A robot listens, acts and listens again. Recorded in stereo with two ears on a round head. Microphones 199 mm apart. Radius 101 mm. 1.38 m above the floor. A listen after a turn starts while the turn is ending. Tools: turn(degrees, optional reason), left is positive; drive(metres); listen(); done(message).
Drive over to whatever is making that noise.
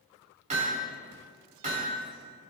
turn(degrees=-35, reason="The hammering: about 35° right or 145° right.")
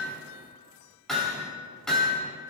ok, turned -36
drive(metres=1.0)
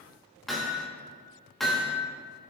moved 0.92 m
drive(metres=1.0)
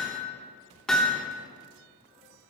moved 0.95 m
drive(metres=1.0)
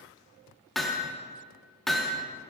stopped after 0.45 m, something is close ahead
done("I am next to the hammering.")